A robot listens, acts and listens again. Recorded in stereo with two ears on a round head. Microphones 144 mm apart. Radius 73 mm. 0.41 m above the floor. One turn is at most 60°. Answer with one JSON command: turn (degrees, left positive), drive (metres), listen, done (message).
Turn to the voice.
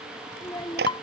{"turn": 15}
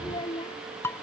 {"turn": 60}
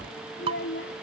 {"turn": 60}
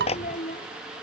{"turn": 45}
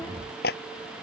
{"listen": true}
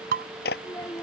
{"turn": 15}
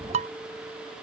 {"listen": true}
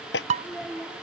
{"done": "Facing the child speaking."}